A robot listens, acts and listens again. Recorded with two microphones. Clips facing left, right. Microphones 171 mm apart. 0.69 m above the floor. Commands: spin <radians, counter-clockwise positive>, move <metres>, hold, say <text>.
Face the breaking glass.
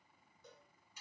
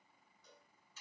hold
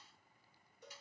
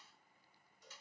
hold
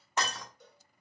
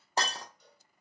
spin -0.61
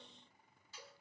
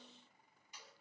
hold
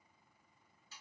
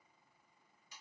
say I heard breaking glass, but can't make it out now. It was about straight ahead or 110° right.